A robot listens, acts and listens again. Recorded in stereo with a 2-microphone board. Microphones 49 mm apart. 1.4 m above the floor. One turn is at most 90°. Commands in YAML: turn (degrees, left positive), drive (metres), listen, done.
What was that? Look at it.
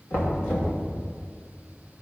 turn: 55
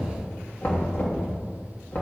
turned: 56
turn: 55
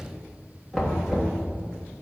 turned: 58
done: "Found it: knocking, straight ahead, 1 to 2 m away."